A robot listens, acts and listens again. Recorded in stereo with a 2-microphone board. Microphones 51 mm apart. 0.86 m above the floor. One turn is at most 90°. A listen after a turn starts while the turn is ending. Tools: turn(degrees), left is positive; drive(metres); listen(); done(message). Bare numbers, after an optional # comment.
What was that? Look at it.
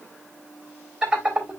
# The laughter: about 15° right or 165° right.
turn(-15)
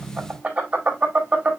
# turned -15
# So it is at 150° right.
turn(-90)
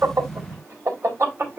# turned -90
# The laughter is now 60° right.
turn(-60)
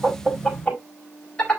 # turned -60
# The laughter is now 20° left.
turn(20)
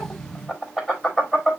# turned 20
done("Facing the laughter.")